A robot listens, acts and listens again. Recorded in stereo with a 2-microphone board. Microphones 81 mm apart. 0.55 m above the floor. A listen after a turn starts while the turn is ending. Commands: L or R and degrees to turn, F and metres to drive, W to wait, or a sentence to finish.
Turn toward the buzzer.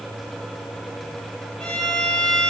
W
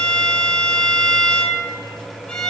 W
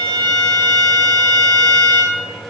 I can't make out a buzzer to turn to.